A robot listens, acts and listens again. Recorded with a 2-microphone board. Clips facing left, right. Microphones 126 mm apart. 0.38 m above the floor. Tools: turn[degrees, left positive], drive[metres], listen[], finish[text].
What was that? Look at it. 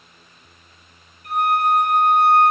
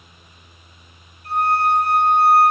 Thought: The violin: about 35° right or 145° right.
Action: turn[-35]
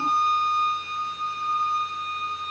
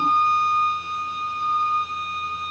Thought: So it is at 105° right.
Action: turn[-105]
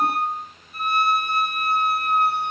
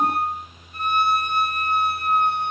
Thought: The violin is now 10° left.
Action: turn[10]
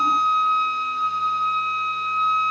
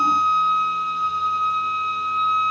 Action: finish[Found it: a violin, straight ahead, 2 to 4 m away.]